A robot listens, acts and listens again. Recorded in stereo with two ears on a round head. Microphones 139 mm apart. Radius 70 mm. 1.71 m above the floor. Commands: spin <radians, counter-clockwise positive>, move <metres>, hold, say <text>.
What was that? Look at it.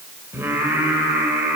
spin -0.52
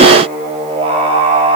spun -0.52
spin -2.53
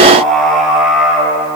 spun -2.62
say Facing the singing, over 4 m away.